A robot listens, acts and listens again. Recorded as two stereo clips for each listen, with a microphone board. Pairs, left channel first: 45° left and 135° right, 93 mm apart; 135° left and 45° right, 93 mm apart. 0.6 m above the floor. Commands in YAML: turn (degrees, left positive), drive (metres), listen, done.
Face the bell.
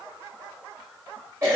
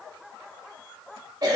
listen: true
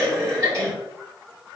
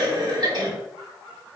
listen: true
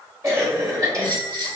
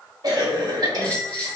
turn: -150
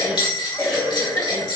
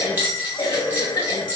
turn: 20
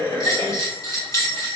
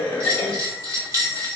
done: "Found it: a bell, straight ahead."